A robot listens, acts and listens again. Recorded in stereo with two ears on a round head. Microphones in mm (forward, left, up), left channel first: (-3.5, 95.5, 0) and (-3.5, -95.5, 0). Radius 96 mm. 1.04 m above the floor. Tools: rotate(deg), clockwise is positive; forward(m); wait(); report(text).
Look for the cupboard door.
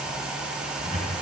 rotate(-35)
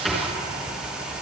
report("Found it: a cupboard door, straight ahead.")